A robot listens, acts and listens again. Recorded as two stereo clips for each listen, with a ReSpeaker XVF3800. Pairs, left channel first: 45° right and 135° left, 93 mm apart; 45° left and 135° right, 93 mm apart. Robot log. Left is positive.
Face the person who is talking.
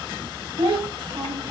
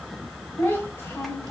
note: The child speaking: 110° left.
cmd yaw +110
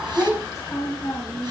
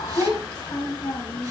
end: Facing the child speaking.